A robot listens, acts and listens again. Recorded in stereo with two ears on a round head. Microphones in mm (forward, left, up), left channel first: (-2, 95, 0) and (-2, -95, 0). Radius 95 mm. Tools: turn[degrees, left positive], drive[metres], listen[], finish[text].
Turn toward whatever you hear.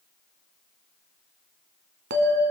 Thought: The bell: about 50° right or 130° right.
Action: turn[-50]
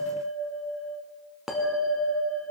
Action: finish[Facing the bell.]